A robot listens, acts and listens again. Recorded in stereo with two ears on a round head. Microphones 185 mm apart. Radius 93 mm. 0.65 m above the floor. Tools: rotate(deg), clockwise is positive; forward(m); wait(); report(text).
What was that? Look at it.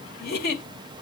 rotate(-50)
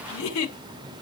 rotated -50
rotate(-80)
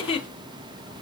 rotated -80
rotate(-30)
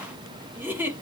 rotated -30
rotate(10)
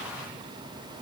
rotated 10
wait()
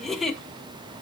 report("Facing the giggle.")